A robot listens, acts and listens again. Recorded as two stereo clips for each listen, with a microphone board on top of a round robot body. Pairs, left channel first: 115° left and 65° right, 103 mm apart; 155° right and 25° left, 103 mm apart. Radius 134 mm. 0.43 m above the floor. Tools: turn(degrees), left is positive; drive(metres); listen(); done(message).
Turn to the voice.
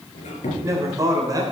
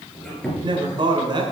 turn(degrees=-15)
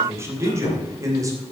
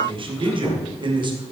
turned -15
turn(degrees=-10)
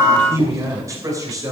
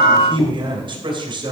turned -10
turn(degrees=-15)
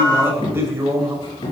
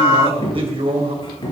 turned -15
done("Facing the man speaking.")